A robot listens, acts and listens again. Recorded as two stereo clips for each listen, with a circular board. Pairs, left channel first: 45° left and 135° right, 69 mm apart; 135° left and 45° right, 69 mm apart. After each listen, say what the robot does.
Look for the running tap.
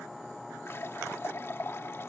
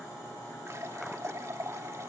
Found it: a running tap, straight ahead.